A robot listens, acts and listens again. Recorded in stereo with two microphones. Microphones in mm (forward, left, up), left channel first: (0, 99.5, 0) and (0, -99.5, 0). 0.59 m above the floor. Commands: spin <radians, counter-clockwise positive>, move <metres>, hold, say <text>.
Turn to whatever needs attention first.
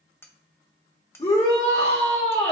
spin 0.52
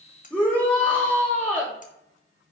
say Facing the shout, 1 to 2 m away.